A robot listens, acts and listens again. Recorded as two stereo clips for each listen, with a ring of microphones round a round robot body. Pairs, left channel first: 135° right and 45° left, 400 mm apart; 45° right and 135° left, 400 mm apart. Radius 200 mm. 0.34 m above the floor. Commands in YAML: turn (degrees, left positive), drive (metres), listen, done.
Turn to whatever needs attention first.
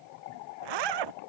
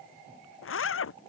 listen: true
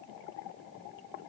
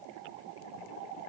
listen: true
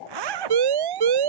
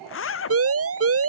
turn: 80
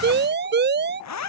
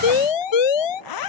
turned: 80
turn: -20
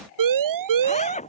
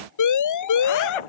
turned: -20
done: "Facing the siren."